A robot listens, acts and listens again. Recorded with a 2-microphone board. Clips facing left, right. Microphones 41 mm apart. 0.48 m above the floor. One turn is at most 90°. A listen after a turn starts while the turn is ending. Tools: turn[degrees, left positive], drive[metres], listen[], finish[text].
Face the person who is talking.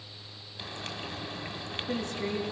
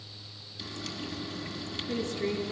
Thought: The woman speaking: about 70° left or 110° left.
Action: turn[70]
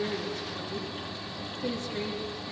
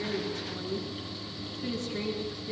Action: finish[Found it: a woman speaking, straight ahead.]